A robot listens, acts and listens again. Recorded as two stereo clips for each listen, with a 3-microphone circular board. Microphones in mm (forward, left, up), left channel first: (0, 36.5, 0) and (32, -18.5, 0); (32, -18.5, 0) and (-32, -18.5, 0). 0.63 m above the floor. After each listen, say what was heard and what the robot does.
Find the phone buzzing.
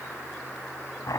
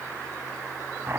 Keep listening.
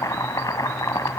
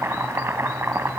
Keep listening.
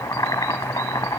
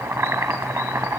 I can't make out a phone buzzing to turn to.